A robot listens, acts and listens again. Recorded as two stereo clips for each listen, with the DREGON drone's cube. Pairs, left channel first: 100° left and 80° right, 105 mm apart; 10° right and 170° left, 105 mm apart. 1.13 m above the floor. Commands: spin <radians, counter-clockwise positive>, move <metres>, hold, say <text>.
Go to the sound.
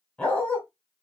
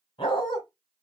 spin 0.35
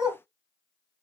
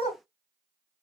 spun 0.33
move 1.0
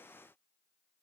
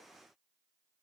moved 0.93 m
hold
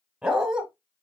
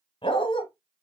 move 1.0
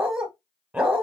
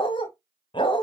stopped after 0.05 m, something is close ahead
say Arrived at the dog barking, straight ahead.